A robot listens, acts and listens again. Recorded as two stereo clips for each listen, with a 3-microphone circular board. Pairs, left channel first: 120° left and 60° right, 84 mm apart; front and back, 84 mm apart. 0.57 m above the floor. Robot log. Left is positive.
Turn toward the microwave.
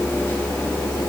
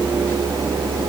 cmd idle
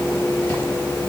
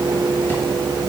cmd idle
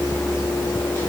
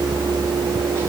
end: I can't make out a microwave.